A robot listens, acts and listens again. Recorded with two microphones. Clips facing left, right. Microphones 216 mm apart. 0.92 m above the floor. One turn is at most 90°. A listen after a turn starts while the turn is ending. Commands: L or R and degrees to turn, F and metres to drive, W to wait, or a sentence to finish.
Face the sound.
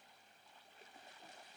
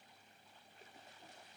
W
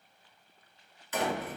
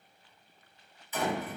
L75
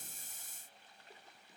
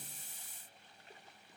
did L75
W
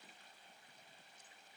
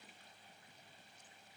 I heard a door slam, but can't make it out now. It was about straight ahead or 30° left.